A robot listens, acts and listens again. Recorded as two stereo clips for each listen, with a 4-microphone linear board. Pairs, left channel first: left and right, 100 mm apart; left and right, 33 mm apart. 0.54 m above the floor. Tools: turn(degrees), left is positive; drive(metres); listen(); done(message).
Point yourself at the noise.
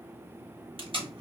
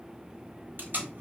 turn(degrees=-65)
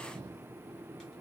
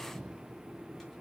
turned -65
listen()
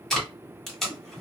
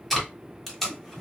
done("Facing the tape being pulled, 1 to 2 m away.")